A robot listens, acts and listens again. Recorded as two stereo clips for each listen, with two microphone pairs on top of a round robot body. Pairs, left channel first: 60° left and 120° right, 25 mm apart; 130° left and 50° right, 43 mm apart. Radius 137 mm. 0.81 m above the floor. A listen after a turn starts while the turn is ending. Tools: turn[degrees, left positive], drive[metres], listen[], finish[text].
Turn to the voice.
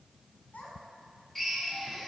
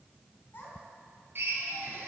Thought: The child speaking: 90° left.
Action: turn[90]
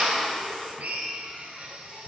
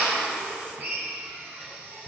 Action: listen[]
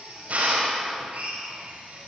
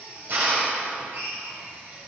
Action: listen[]
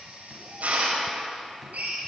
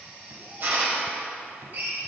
Action: finish[I heard a child speaking from this way, but can't make it out now.]